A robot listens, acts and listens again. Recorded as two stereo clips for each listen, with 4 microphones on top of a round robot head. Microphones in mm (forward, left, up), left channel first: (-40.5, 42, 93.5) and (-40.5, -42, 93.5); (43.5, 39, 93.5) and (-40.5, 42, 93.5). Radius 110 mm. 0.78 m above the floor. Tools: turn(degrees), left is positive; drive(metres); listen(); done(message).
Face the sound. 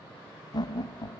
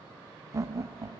turn(degrees=125)
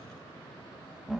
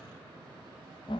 done("Found it: laughter, straight ahead.")